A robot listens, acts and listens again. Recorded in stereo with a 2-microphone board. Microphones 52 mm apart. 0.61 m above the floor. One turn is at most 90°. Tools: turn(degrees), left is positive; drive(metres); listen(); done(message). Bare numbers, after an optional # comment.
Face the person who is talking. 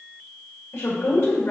# The woman speaking: about 60° left or 120° left.
turn(60)
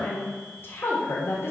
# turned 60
# So it is at 55° left.
turn(55)
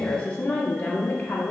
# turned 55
# The woman speaking is now 35° left.
turn(35)
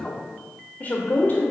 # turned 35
# The woman speaking is now 40° left.
turn(40)
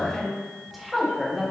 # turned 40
done("Facing the woman speaking, 1 to 2 m away.")